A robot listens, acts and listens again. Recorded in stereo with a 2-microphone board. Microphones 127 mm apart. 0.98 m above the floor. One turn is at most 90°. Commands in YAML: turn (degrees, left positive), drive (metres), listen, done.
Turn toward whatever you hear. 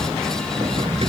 turn: -45
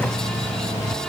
listen: true
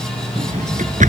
turn: -85
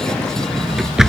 done: "Found it: a drawer, straight ahead."